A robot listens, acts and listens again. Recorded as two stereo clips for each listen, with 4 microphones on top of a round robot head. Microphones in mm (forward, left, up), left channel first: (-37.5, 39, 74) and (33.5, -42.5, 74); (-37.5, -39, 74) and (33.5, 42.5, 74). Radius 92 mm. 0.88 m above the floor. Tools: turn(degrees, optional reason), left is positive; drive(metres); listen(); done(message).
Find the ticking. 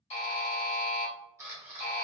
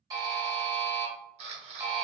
listen()
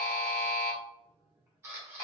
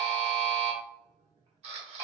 listen()
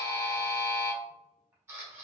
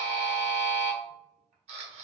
done("I can't make out ticking to turn to.")